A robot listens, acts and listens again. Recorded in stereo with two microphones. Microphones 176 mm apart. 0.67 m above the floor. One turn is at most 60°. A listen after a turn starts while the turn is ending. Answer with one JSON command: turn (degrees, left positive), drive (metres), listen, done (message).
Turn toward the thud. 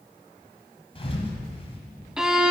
{"turn": 35}
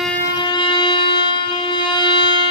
{"listen": true}
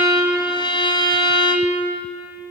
{"done": "I heard a thud, but can't make it out now. It was about straight ahead or 110° left."}